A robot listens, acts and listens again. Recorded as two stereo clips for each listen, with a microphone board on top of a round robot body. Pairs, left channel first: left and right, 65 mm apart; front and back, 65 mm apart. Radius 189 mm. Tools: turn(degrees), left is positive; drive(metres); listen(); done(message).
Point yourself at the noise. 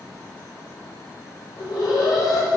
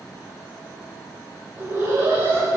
turn(degrees=120)
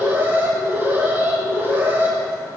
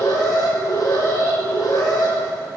turn(degrees=-30)
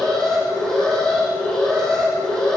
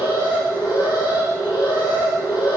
turn(degrees=10)
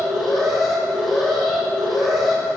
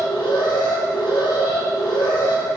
done("Found it: an alarm, straight ahead, over 4 m away.")